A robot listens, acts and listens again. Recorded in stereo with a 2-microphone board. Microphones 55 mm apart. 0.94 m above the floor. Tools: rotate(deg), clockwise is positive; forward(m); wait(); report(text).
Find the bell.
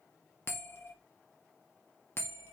rotate(-45)
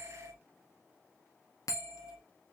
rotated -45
rotate(-90)
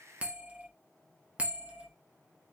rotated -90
rotate(25)
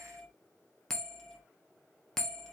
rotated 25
rotate(-10)
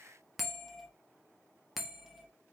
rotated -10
report("Found it: a bell, straight ahead, under 1 m away.")